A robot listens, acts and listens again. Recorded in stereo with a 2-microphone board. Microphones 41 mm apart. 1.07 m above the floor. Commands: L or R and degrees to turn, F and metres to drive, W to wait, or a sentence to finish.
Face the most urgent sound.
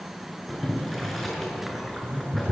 W
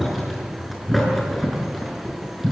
W
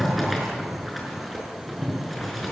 I can't make out anything urgent to turn to.